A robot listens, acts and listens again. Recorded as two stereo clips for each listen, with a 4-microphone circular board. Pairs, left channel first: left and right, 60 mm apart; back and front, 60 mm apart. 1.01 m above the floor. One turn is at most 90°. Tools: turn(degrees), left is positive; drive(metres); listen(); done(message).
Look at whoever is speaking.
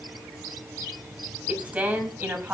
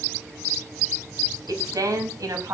turn(degrees=-25)
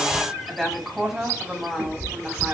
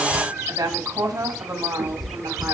turn(degrees=-10)
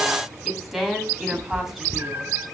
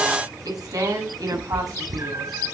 done("Found it: a woman speaking, straight ahead.")